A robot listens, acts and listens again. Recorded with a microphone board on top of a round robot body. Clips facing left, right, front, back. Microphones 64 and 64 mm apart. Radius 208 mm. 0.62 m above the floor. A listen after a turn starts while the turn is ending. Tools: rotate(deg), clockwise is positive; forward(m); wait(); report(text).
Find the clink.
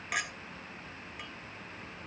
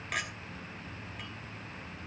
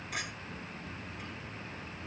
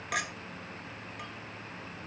rotate(-175)
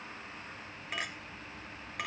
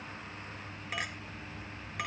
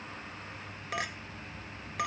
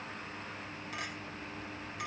report("Found it: a clink, straight ahead.")